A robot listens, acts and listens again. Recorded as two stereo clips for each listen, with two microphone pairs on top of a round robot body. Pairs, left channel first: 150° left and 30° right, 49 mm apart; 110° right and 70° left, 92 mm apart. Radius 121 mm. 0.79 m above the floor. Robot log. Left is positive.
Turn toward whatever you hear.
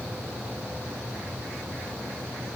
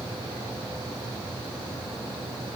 cmd idle
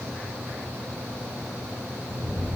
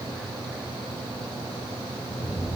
note: The rattle: 10° right.
cmd yaw -10
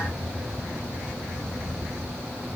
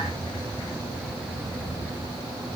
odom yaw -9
end: Found it: a rattle, straight ahead.